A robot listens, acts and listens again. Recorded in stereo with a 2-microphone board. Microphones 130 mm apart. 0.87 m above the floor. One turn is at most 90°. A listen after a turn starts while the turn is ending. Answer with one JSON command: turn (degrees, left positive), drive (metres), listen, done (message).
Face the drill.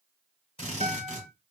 {"turn": 45}
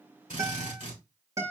{"turn": 85}
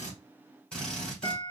{"done": "Facing the drill."}